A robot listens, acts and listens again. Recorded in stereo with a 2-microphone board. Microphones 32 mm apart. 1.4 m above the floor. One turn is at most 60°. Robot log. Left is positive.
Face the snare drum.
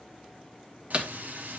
note: The snare drum: about 35° right or 145° right.
cmd yaw -35
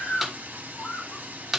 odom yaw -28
note: So it is at 10° right.
cmd yaw -10
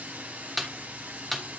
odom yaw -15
end: Facing the snare drum.